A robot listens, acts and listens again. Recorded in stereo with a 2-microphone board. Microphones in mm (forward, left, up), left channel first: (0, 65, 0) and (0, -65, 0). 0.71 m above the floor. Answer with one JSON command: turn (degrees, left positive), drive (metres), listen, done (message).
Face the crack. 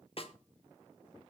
{"listen": true}
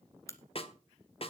{"turn": 25}
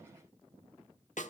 {"listen": true}
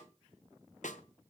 {"done": "I heard a crack, but can't make it out now. It was about straight ahead or 130° left."}